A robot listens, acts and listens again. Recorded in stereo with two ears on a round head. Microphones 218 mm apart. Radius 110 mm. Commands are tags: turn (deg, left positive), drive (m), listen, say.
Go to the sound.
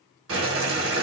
<turn deg="-60"/>
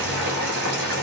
<turn deg="-50"/>
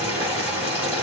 <turn deg="-10"/>
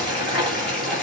<drive m="1.0"/>
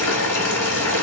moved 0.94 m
<turn deg="15"/>
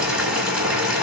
<drive m="1.0"/>
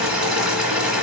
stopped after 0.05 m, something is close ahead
<say>Arrived at the boiling, straight ahead.</say>